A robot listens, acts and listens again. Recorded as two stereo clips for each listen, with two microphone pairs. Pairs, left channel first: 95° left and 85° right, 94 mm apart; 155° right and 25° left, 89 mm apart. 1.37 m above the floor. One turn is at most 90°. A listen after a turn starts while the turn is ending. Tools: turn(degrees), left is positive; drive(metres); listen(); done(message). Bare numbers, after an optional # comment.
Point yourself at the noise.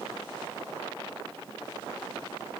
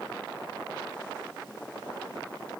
listen()
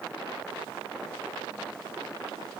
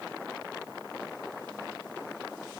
listen()
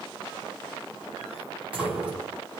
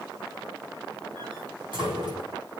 # The door slam: 10° right.
turn(-10)
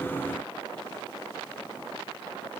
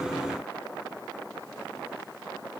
done("I heard a door slam from this way, but can't make it out now.")